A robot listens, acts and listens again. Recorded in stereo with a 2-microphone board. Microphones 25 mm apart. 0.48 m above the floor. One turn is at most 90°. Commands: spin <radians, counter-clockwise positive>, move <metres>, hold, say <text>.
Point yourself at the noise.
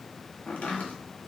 spin 1.22
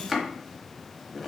say Found it: chopping, straight ahead, 1 to 2 m away.